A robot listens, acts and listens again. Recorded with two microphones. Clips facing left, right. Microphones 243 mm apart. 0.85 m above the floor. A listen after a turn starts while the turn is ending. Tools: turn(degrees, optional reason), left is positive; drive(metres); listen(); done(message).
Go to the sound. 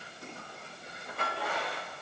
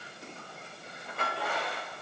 listen()
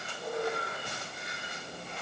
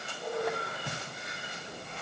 turn(degrees=-75, reason="The squeak: about 75° right or 105° right.")
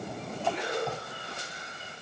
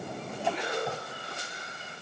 listen()
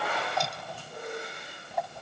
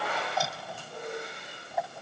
drive(metres=1.0)
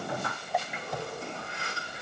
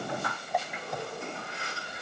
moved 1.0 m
drive(metres=1.0)
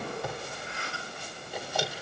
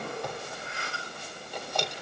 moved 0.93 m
drive(metres=1.0)
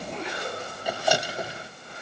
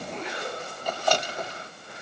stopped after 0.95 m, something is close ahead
turn(degrees=10, reason="The squeak is now 10° left.")
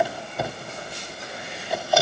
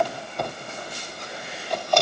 done("I am next to the squeak.")